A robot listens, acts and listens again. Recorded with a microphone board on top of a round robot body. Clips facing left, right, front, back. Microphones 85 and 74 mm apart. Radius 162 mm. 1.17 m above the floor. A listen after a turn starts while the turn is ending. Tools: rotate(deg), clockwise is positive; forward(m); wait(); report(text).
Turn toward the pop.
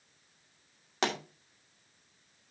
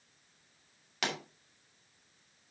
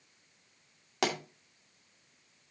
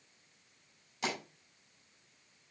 rotate(-30)
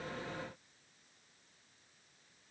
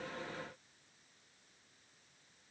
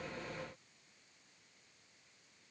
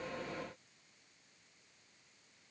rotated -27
report("I heard a pop from this way, but can't make it out now.")